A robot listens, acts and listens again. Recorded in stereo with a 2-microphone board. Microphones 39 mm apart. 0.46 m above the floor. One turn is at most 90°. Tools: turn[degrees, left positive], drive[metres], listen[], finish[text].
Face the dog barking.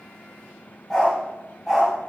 Action: turn[30]
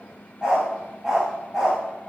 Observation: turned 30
Action: finish[Found it: a dog barking, straight ahead, over 4 m away.]